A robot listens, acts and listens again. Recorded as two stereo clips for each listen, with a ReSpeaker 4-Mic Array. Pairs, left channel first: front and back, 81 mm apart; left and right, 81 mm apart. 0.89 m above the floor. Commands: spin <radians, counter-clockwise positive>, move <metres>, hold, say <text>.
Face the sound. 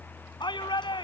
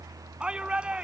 spin -0.26
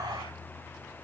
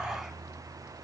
say Found it: a shout, straight ahead.